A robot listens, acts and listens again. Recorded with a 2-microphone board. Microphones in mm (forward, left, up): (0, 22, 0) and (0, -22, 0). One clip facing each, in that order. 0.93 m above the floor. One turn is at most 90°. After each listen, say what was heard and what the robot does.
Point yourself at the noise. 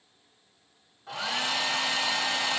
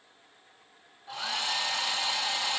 Turn 90° left.
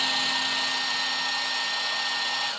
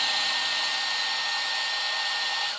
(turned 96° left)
Found it: a hair dryer, straight ahead, 1 to 2 m away.